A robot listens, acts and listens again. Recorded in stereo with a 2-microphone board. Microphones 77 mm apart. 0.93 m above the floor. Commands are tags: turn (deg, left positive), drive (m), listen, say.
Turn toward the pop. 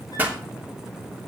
<turn deg="-20"/>
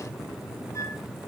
<listen/>
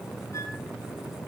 <say>I heard a pop, but can't make it out now. It was about straight ahead or 140° right.</say>